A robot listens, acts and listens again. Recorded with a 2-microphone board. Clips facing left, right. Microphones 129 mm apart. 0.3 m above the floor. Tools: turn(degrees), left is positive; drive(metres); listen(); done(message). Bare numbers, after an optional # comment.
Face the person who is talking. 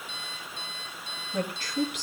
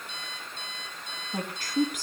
# The woman speaking: about 45° right or 135° right.
turn(-45)
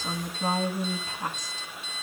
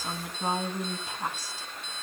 # So it is at 10° right.
turn(-10)
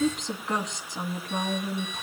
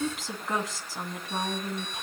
done("Found it: a woman speaking, straight ahead.")